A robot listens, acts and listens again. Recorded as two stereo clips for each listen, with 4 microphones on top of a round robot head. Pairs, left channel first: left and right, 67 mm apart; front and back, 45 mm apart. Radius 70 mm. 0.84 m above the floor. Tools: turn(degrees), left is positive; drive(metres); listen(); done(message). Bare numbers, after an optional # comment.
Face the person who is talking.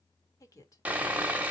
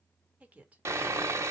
# The woman speaking: 125° left.
turn(125)
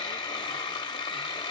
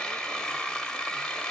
listen()
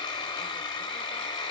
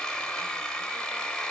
listen()
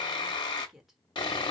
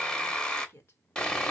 done("Facing the woman speaking.")